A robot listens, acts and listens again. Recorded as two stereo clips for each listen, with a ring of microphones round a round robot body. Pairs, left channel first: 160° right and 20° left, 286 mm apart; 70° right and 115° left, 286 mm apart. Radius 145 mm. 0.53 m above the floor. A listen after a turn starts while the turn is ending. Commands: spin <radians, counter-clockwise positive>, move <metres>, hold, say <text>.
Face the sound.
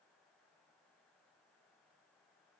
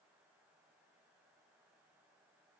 hold
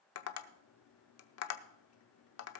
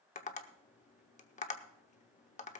spin -2.27
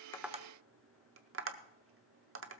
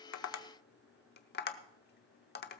spin -0.26
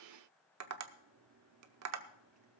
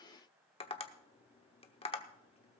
say Found it: tapping, straight ahead.